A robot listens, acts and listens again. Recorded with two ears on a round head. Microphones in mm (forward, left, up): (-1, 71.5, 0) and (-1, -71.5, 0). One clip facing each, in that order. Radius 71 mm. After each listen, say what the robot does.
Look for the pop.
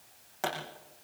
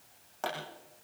Turn 30° left.
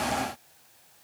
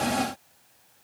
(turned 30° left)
Keep listening.
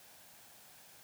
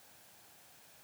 I heard a pop, but can't make it out now. It was about 20° right or 140° left.